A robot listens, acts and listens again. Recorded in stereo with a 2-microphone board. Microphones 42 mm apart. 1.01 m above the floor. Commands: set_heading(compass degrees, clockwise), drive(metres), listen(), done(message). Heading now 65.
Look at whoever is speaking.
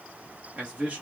set_heading(95)
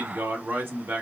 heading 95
set_heading(215)
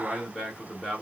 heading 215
done("Found it: a man speaking, straight ahead, 2 to 4 m away.")